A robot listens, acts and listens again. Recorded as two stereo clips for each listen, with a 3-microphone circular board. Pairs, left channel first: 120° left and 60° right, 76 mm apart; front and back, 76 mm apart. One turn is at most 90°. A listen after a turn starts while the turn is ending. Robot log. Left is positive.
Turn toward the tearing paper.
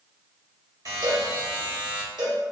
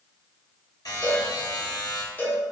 cmd idle
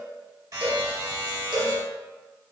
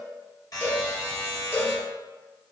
cmd idle
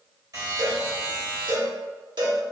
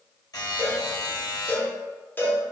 end: I can't make out tearing paper to turn to.